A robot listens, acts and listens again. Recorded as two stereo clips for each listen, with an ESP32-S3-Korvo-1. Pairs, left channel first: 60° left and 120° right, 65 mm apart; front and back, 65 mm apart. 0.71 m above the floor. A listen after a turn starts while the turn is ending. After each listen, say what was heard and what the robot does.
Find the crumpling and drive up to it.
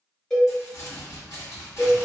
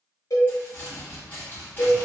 The crumpling: 55° left. Turn 55° left.
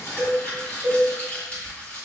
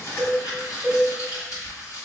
Drive 1.0 m forward.
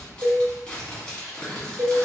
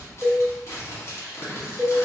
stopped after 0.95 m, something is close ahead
The crumpling is now 10° right. Turn 10° right.
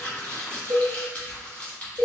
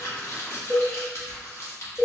I am next to the crumpling.